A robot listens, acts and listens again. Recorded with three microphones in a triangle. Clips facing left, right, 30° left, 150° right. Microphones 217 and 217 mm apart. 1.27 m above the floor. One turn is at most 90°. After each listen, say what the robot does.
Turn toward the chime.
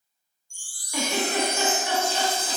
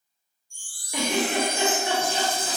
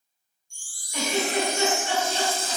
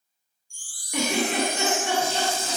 Turn 90° left.
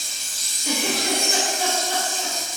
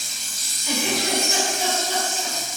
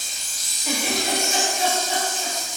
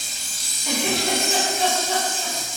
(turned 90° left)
Keep listening.
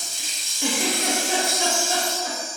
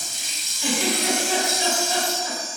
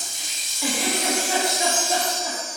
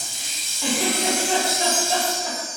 Turn 10° left.
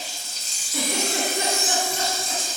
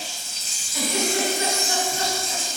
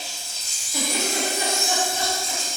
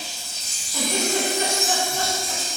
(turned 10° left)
Facing the chime, under 1 m away.